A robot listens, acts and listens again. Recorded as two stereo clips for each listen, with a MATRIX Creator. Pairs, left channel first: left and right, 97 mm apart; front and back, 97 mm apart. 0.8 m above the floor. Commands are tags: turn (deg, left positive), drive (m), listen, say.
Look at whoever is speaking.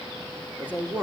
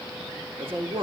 <turn deg="-160"/>
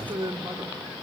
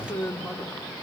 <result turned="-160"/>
<turn deg="-65"/>
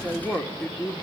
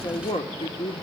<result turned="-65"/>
<turn deg="10"/>
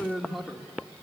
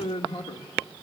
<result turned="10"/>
<say>Found it: a man speaking, straight ahead, 1 to 2 m away.</say>